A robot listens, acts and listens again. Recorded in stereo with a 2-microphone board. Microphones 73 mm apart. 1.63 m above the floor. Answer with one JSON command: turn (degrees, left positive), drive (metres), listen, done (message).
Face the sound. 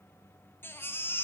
{"turn": 30}
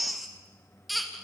{"done": "Facing the baby crying, 2 to 4 m away."}